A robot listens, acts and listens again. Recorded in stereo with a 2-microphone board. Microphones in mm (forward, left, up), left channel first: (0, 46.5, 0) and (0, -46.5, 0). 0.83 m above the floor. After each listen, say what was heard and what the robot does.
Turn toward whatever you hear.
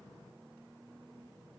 Keep listening.
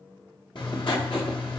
The writing: about 60° left or 120° left. Turn 60° left.
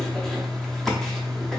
Facing the writing, under 1 m away.